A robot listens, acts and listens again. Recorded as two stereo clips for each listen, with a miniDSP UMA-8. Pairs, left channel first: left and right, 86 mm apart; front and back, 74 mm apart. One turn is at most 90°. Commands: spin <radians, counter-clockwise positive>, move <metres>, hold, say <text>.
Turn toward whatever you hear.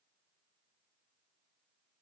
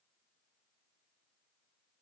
hold
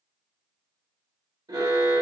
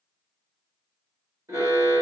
spin -1.57
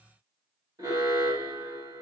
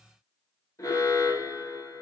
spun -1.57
spin -0.70
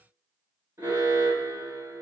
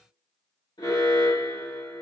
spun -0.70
spin -0.44
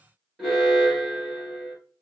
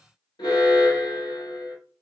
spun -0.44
say Facing the alarm.